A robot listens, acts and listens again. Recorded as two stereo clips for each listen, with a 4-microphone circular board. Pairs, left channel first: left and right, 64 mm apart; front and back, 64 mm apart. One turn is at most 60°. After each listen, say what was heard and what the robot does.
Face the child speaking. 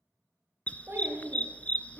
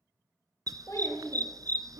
The child speaking: 35° right. Turn 35° right.
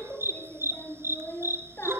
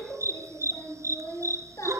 The child speaking is now 35° left. Turn 35° left.
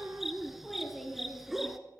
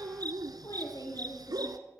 Found it: a child speaking, straight ahead, over 4 m away.